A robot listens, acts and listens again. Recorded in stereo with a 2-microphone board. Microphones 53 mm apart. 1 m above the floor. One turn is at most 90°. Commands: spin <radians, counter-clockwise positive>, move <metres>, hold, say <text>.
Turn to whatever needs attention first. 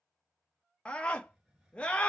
spin 0.35
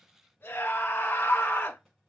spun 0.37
spin 1.57
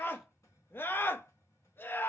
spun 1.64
spin 0.79
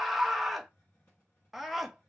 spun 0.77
say Facing the scream, under 1 m away.